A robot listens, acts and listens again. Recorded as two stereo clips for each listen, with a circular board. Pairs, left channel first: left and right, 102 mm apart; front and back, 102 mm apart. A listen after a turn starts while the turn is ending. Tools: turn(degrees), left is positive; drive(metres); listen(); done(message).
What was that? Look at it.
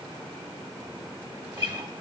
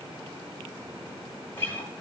turn(degrees=-65)
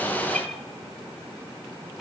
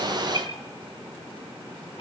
done("Facing the guitar.")